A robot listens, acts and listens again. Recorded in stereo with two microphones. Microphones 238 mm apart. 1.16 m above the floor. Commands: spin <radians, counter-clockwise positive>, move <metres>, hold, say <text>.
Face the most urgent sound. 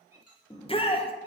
spin 0.44
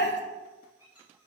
spin 2.27
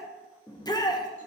spin 0.26
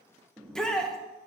say Found it: a shout, straight ahead.